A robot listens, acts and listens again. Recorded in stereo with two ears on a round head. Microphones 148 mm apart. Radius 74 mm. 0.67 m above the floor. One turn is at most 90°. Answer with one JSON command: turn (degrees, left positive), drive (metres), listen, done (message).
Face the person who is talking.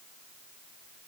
{"listen": true}
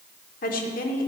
{"turn": 55}
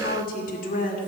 {"turn": 60}
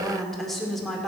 {"done": "Found it: a woman speaking, straight ahead."}